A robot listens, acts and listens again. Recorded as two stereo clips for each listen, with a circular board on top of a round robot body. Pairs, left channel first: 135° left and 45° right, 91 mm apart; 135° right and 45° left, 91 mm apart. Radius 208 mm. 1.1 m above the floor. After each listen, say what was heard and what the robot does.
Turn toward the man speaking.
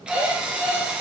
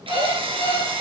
Keep listening.
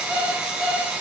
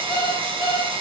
Keep listening.
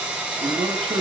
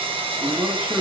The man speaking: 25° right. Turn 25° right.
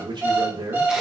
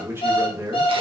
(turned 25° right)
The man speaking is now 10° right. Turn 10° right.
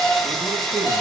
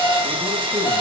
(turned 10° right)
Keep listening.
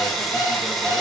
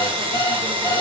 Keep listening.
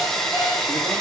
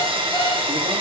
I heard a man speaking from this way, but can't make it out now.